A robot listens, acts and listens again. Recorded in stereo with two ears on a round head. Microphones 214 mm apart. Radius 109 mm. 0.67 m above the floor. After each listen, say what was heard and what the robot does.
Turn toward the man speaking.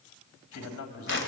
The man speaking: about 75° left or 105° left. Turn 75° left.
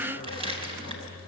Keep listening.
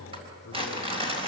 Keep listening.
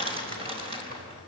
I heard a man speaking, but can't make it out now. It was about straight ahead or 30° left.